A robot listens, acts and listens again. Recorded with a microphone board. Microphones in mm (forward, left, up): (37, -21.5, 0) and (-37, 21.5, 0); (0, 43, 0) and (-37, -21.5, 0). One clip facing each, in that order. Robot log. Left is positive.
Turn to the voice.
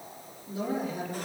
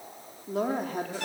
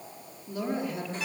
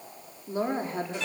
note: The woman speaking: 175° right.
cmd yaw -175
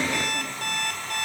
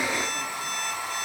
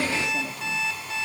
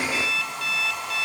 cmd idle
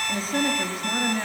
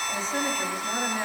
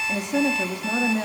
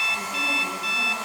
note: The woman speaking is now 60° left.
cmd yaw +60
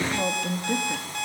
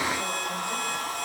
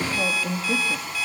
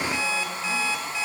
note: The woman speaking is now 20° left.
cmd yaw +20
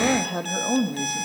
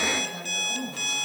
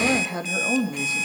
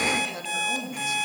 end: Facing the woman speaking.